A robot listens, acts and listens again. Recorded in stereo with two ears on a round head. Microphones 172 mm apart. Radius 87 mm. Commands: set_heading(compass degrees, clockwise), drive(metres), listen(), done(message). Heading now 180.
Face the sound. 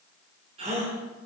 set_heading(215)
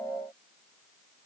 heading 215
listen()
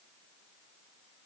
done("I heard a gasp, but can't make it out now. It was about straight ahead or 110° right.")